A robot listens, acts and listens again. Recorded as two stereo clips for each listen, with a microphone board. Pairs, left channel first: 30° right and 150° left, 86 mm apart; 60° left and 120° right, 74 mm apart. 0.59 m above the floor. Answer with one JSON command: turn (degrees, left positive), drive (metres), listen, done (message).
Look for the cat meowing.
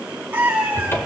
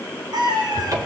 {"turn": -140}
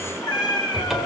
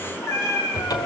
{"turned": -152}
{"turn": 10}
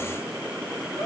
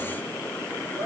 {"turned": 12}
{"listen": true}
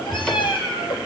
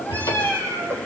{"turn": -10}
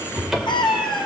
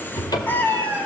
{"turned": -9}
{"done": "Facing the cat meowing, 2 to 4 m away."}